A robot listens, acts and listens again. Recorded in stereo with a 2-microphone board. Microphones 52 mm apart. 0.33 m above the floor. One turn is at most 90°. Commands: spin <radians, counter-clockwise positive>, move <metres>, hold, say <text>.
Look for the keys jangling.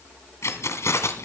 spin 1.13
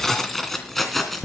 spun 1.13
say Found it: keys jangling, straight ahead.